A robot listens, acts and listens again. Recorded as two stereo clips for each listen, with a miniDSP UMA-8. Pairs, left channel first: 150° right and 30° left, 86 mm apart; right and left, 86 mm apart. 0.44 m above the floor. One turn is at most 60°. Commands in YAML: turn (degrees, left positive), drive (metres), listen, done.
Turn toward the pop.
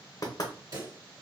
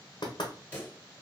turn: -15
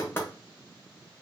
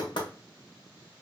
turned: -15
done: "I heard a pop from this way, but can't make it out now."